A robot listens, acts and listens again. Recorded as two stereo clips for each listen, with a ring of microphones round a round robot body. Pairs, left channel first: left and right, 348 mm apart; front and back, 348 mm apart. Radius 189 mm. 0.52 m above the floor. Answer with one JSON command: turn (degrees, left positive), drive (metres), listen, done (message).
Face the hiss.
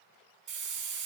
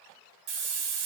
{"turn": 180}
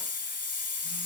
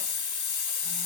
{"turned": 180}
{"turn": 20}
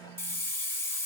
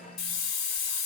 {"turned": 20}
{"done": "Facing the hiss, 1 to 2 m away."}